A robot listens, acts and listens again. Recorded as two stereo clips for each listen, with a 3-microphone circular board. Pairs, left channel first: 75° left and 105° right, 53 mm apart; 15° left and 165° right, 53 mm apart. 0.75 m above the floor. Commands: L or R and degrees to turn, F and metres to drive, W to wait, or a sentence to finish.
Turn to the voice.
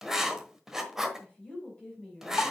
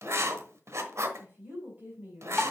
L135
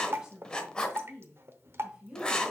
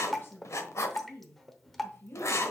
R35
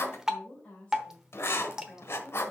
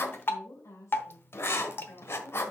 L10
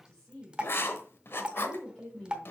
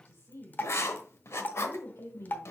Facing the woman speaking.